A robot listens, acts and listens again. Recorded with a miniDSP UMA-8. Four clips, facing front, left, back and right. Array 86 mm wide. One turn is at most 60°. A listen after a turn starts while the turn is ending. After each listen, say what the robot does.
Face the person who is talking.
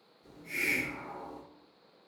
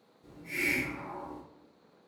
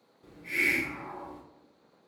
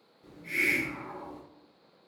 Keep listening.
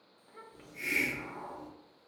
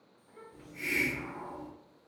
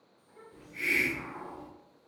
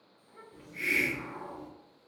Facing the child speaking, 1 to 2 m away.